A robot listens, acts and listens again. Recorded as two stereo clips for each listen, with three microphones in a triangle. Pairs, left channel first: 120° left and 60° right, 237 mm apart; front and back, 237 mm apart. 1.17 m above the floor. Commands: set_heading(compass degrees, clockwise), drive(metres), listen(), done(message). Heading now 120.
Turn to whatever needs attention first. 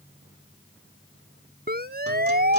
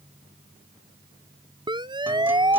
set_heading(230)
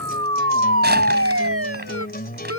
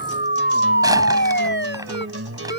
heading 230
set_heading(270)
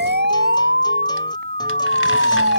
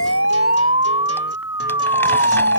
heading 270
set_heading(285)
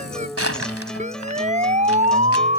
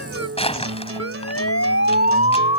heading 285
done("Facing the siren.")